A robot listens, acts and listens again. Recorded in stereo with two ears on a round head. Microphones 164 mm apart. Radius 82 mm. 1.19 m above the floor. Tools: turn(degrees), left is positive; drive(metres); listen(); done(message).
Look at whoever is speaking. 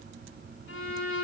listen()
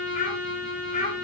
turn(degrees=40)
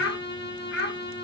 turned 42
turn(degrees=115)
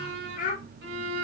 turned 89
turn(degrees=50)
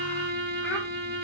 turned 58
turn(degrees=-10)
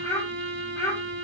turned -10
turn(degrees=15)
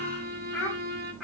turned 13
done("Found it: a child speaking, straight ahead.")